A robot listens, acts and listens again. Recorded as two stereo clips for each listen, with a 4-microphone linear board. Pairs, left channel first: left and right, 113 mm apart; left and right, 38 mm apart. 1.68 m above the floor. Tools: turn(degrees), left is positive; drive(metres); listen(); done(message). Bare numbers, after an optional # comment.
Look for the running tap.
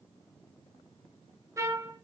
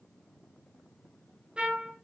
listen()
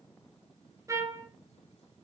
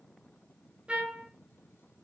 listen()
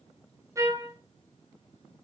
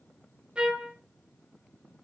done("I can't make out a running tap, only a trumpet.")